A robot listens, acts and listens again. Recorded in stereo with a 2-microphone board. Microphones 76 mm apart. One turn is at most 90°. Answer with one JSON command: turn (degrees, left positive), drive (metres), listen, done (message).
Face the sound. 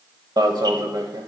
{"turn": -60}
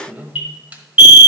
{"turn": -20}
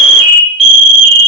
{"done": "Found it: an alarm, straight ahead, 1 to 2 m away."}